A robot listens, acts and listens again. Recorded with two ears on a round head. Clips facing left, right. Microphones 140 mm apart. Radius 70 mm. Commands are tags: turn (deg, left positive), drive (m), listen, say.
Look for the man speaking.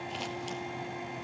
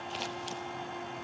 <listen/>
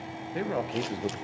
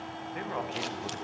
<turn deg="45"/>
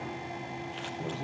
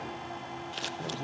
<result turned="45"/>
<say>Facing the man speaking, 1 to 2 m away.</say>